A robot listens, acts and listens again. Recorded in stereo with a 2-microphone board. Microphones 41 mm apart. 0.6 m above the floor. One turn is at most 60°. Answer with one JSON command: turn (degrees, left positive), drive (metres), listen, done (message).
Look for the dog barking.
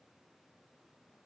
{"listen": true}
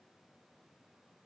{"listen": true}
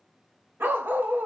{"turn": -45}
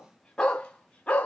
{"turn": 30}
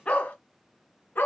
{"turn": 45}
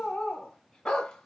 {"turn": 15}
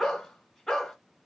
{"done": "Found it: a dog barking, straight ahead, 1 to 2 m away."}